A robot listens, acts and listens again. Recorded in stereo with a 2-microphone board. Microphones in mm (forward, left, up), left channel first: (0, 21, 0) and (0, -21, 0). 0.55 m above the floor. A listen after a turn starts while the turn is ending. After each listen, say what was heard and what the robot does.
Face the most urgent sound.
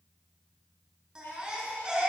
The baby crying: about 20° right or 160° right. Turn 20° right.
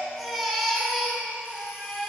Found it: a baby crying, straight ahead.